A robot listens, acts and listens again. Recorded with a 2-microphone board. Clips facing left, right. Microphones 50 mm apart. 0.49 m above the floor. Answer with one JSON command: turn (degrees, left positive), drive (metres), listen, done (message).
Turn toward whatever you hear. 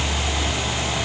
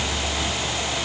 {"listen": true}
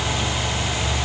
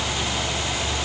{"listen": true}
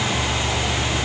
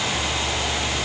{"done": "I can't make out anything."}